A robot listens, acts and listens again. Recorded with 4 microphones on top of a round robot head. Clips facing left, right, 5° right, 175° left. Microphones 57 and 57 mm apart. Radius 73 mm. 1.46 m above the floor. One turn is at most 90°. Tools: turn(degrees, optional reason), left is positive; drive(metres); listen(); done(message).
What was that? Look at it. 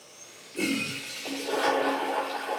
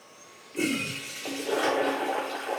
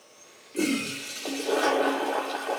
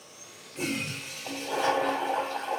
done("Found it: a toilet flushing, straight ahead.")